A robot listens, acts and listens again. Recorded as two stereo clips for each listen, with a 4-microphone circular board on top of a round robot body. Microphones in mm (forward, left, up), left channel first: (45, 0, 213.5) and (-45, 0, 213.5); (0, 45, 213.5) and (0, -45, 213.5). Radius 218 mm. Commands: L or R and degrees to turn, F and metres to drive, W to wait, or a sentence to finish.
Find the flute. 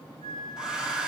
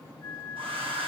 L25
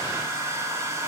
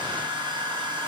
W
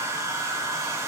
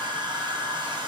W
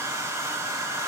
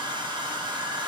Facing where the flute came from. I can't hear it now.